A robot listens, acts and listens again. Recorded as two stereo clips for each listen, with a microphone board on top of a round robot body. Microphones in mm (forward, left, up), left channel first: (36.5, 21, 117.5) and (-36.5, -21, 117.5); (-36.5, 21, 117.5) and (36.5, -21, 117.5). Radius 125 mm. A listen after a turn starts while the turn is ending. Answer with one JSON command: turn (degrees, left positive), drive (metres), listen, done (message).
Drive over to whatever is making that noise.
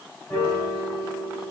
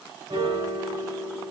{"turn": -60}
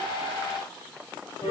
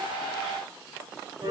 {"drive": 1.0}
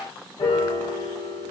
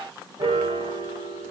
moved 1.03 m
{"drive": 1.0}
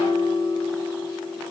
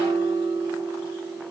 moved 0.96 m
{"turn": -20}
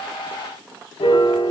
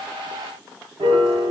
{"drive": 1.0}
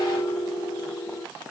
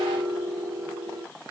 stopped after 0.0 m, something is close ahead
{"done": "Arrived at the piano, straight ahead."}